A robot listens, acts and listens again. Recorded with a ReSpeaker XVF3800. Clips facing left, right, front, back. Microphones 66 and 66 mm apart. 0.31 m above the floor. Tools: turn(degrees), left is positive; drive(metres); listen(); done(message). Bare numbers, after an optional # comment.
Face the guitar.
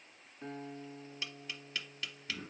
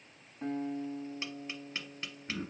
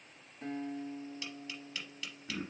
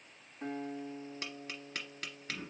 # The guitar: 115° right.
turn(-115)
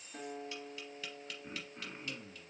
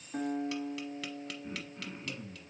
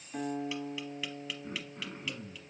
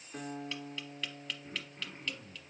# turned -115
# The guitar is now 45° right.
turn(-45)
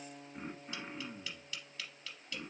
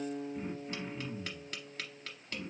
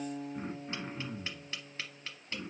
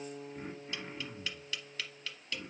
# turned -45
# The guitar is now 20° right.
turn(-20)
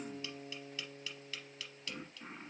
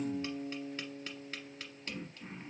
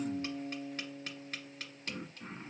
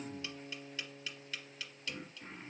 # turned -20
done("Facing the guitar.")